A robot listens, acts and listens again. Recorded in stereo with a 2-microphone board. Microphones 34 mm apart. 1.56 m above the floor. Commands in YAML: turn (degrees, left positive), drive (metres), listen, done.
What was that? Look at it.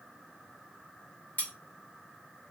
turn: 60
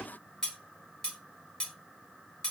turn: 20
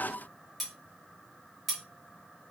done: "Facing the cutlery clinking, 1 to 2 m away."